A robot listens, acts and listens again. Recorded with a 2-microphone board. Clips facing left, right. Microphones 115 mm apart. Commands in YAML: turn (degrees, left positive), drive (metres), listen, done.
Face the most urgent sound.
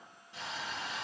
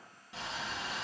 listen: true
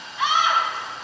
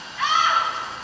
turn: 20
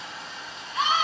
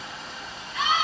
turn: 140
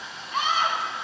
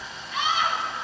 turn: 55
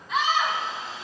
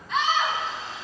done: "Found it: a scream, straight ahead, 2 to 4 m away."